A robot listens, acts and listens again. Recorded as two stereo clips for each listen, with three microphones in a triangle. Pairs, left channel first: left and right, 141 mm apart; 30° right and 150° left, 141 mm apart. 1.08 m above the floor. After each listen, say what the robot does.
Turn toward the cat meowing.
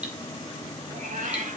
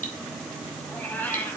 Turn 105° right.
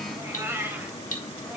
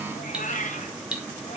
Turn 15° right.
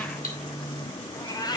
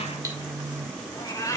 Turn 35° left.
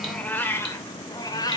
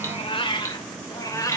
Turn 30° left.
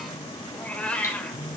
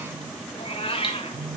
Turn 10° left.
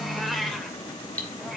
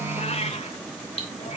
Found it: a cat meowing, straight ahead, 1 to 2 m away.